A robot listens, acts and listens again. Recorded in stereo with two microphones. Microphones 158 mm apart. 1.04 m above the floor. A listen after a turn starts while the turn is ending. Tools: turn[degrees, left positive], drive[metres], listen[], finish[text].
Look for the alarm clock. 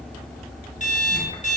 Thought: The alarm clock: about 50° left or 130° left.
Action: turn[50]
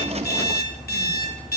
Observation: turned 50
Thought: So it is at 80° left.
Action: turn[80]
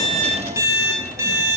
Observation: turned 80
Thought: The alarm clock is now 20° right.
Action: turn[-20]
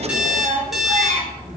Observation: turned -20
Action: finish[Facing the alarm clock, 1 to 2 m away.]